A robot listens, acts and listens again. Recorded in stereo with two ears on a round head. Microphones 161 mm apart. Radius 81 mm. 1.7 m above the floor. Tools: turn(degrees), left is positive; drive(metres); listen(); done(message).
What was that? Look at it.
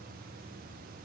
listen()
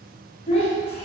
turn(degrees=35)
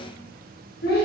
turn(degrees=100)
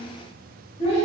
turn(degrees=40)
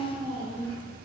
turn(degrees=25)
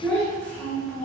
turn(degrees=10)
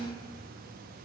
listen()
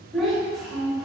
done("Facing the child speaking, under 1 m away.")